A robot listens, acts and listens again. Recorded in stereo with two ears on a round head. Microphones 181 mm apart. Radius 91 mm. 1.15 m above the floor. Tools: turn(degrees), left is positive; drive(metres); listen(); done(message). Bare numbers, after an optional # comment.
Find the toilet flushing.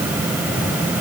listen()
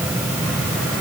listen()
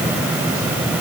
done("I can't make out a toilet flushing to turn to.")